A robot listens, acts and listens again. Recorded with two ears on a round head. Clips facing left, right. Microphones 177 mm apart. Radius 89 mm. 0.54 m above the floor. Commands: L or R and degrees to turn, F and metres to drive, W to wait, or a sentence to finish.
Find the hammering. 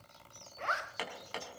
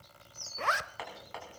L40
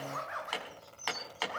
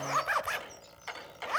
L100
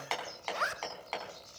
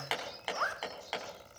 R10
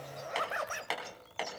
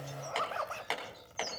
Facing the hammering.